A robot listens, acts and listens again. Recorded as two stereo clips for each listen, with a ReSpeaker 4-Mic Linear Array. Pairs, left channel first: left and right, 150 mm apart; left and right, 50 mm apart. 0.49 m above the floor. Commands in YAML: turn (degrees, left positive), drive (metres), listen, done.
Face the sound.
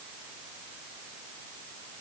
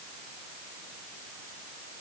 listen: true
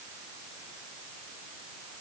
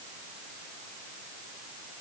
listen: true
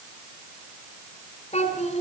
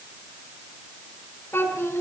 turn: 45
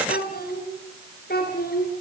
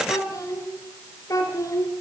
turn: 95
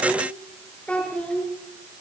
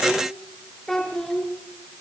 done: "Found it: a child speaking, straight ahead."